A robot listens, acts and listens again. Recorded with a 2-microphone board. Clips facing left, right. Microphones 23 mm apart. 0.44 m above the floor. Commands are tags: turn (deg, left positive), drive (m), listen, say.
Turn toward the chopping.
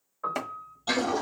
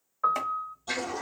<turn deg="30"/>
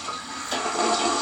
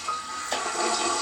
<listen/>
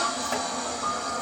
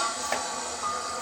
<listen/>
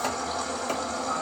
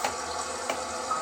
<say>I heard chopping, but can't make it out now. It was about 20° right or 140° left.</say>